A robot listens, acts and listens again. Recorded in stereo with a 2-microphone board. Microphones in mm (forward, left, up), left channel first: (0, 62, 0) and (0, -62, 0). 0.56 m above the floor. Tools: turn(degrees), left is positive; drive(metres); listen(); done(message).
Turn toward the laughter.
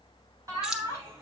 turn(degrees=-25)
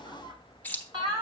turn(degrees=-40)
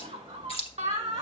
turn(degrees=-120)
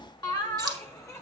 turn(degrees=25)
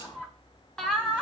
done("Found it: laughter, straight ahead, 1 to 2 m away.")